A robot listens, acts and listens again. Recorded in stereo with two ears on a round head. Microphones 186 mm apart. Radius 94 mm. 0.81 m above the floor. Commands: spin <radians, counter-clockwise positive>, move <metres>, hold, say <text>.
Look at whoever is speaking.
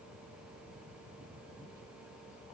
hold
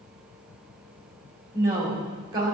spin -0.35
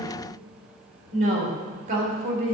spin -2.44
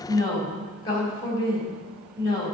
spin 0.35
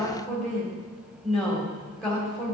say Found it: a woman speaking, straight ahead.